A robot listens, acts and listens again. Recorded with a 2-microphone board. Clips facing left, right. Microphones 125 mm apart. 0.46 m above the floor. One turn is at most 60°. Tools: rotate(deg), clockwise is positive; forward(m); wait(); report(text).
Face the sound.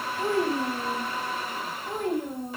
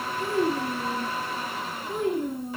rotate(-45)
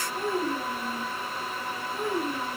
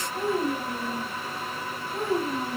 rotate(25)
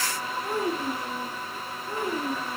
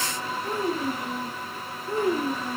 report("Found it: a child speaking, straight ahead, 2 to 4 m away.")